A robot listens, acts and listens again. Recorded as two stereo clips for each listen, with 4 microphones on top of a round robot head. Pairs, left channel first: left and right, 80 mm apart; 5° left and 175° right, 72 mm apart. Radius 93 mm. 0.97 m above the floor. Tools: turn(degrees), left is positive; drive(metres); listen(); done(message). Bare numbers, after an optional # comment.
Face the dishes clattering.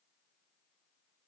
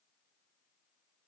listen()
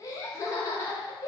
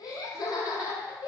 listen()
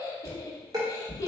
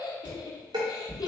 # The dishes clattering: 140° right.
turn(-140)
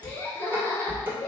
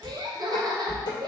# The dishes clattering is now 25° right.
turn(-25)
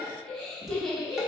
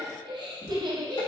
listen()
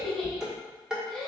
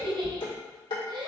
# The dishes clattering is now 10° right.
turn(-10)
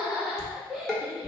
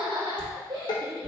done("Found it: dishes clattering, straight ahead, 1 to 2 m away.")